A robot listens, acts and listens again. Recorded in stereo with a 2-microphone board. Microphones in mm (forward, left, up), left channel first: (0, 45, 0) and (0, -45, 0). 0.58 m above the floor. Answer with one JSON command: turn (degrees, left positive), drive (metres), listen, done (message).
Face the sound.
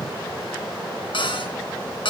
{"turn": 70}
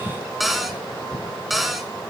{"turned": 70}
{"done": "Found it: a cupboard door, straight ahead, 2 to 4 m away."}